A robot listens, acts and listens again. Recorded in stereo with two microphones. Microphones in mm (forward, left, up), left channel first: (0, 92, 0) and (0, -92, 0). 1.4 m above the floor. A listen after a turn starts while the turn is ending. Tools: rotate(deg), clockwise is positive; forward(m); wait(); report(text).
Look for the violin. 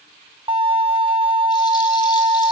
rotate(30)
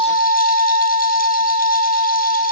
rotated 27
rotate(120)
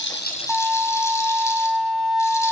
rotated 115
report("Facing the violin.")